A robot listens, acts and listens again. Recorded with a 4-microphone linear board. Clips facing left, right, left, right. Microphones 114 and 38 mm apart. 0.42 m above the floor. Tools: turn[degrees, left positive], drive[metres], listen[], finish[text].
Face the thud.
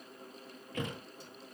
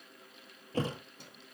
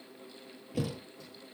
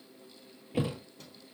Thought: The thud: about 35° right or 145° right.
Action: turn[-35]
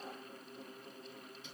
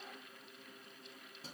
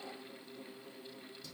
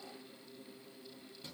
Action: listen[]
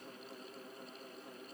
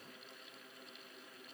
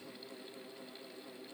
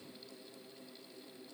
Action: finish[I heard a thud, but can't make it out now. It was about straight ahead or 110° right.]